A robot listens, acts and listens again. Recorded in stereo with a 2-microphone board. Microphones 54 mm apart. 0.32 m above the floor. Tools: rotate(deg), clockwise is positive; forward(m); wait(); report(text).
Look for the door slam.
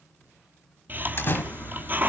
rotate(-45)
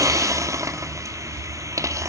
wait()
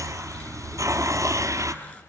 report("I heard a door slam, but can't make it out now. It was about straight ahead or 90° left.")